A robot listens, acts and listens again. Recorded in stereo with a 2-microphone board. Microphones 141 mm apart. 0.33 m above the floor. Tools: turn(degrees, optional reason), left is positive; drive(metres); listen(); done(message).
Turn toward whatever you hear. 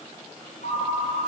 turn(degrees=70, reason="The ringtone: about 70° left or 110° left.")
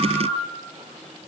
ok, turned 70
done("Found it: a ringtone, straight ahead.")